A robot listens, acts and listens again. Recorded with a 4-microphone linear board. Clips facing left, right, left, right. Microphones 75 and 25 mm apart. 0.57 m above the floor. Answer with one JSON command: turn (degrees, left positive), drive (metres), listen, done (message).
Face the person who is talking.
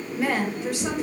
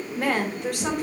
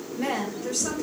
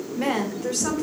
{"turn": -60}
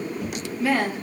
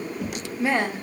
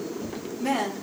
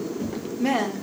{"turn": -20}
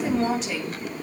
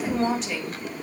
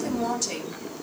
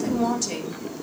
{"done": "Found it: a woman speaking, straight ahead, 1 to 2 m away."}